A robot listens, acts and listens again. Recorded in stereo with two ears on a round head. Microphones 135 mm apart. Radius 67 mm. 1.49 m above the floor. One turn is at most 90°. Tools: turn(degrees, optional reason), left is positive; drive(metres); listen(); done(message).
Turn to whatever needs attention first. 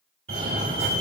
turn(degrees=-40, reason="The fire alarm: about 40° right or 140° right.")
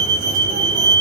turn(degrees=-90, reason="So it is at 90° right.")
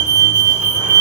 turn(degrees=-20, reason="The fire alarm is now 20° right.")
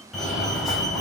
done("Facing the fire alarm.")